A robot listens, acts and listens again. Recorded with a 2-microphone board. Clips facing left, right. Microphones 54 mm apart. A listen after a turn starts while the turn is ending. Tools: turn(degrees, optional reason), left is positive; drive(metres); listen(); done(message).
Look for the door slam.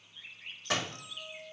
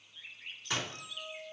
turn(degrees=75, reason="The door slam: about 75° left or 105° left.")
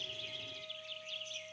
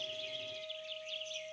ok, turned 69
listen()
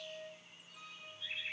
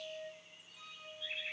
done("I heard a door slam, but can't make it out now. It was about 5° left or 35° left.")